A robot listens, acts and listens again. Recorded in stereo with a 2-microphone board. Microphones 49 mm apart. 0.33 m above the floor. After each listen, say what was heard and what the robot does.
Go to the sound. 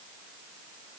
Keep listening.
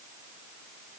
Keep listening.
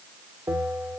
The bell: about 70° right or 110° right. Turn 70° right.
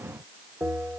So it is at 35° right. Turn 35° right.
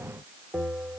The bell is now 20° right. Turn 20° right.
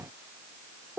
Drive 1.0 m forward.
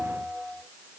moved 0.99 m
Drive 1.0 m forward.
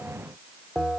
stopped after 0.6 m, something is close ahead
I am next to the bell.